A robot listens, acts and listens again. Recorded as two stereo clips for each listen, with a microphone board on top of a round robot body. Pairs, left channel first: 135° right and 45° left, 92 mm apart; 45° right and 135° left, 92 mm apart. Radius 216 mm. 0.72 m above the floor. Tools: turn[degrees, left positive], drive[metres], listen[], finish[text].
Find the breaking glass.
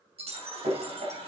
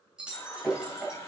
Thought: The breaking glass: 55° left.
Action: turn[55]
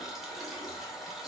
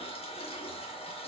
Action: finish[Facing where the breaking glass came from. I can't hear it now.]